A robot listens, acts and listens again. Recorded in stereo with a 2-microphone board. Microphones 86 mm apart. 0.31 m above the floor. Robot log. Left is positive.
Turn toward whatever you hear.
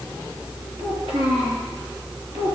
cmd yaw -90
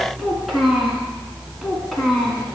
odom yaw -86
end: Found it: a child speaking, straight ahead, 2 to 4 m away.